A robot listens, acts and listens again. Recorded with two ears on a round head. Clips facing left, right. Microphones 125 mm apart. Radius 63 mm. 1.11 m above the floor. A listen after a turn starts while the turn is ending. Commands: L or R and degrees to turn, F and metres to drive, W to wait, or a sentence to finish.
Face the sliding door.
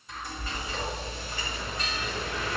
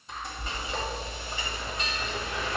L30
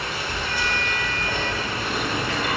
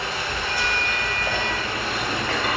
L135
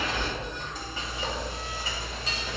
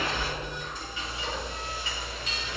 W
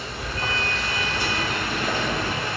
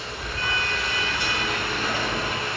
R30
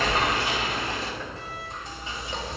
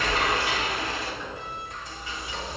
R20
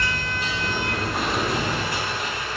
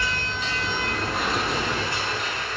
Found it: a sliding door, straight ahead, 1 to 2 m away.